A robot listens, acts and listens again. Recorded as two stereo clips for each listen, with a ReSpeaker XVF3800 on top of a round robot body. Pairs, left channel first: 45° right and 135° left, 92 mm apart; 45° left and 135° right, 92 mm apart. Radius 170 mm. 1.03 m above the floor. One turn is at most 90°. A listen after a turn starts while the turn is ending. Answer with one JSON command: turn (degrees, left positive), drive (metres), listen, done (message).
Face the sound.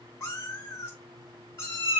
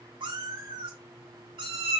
{"turn": -90}
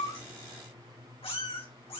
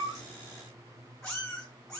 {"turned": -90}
{"turn": -35}
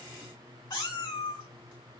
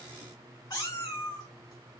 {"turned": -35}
{"done": "Facing the cat meowing, 2 to 4 m away."}